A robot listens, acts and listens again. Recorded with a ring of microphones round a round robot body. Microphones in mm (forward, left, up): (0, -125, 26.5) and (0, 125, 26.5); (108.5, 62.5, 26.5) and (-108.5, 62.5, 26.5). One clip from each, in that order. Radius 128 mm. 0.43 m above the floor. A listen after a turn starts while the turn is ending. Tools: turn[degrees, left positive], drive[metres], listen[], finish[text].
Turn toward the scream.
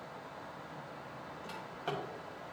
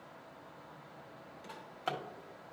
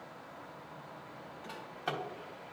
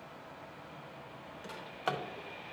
Action: listen[]
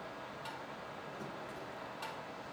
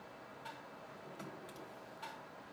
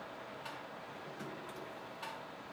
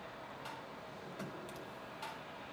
Action: listen[]
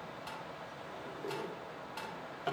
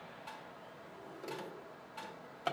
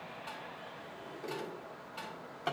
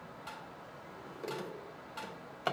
Action: finish[I can't make out a scream to turn to.]